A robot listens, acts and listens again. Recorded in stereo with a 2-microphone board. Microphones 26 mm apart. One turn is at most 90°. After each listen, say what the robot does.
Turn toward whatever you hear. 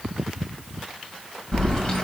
Turn 25° left.
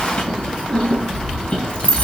Turn 90° left.
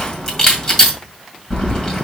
Turn 20° left.
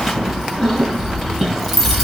Found it: keys jangling, straight ahead.